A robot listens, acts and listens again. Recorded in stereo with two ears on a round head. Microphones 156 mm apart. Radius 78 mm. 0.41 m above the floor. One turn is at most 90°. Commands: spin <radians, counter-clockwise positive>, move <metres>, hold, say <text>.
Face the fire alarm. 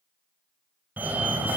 spin -0.52
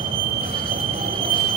spin -1.57
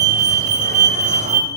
spin -1.05
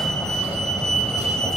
say Facing the fire alarm, 2 to 4 m away.